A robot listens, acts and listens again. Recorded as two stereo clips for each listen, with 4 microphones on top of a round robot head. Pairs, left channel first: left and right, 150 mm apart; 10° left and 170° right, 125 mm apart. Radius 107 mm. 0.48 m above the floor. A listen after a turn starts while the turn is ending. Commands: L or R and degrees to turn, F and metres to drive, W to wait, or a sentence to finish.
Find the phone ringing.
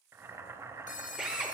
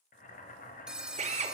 L110
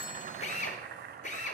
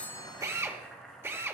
W
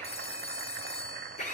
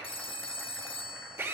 L50
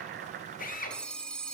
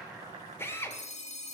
Found it: a phone ringing, straight ahead, 1 to 2 m away.